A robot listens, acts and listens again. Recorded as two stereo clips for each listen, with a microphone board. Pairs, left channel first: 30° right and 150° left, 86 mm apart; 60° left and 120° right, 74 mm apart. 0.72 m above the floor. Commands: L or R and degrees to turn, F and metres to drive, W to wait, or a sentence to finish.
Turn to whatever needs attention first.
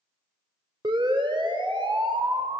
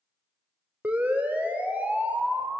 L170
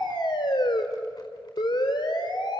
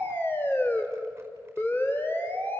Facing the siren.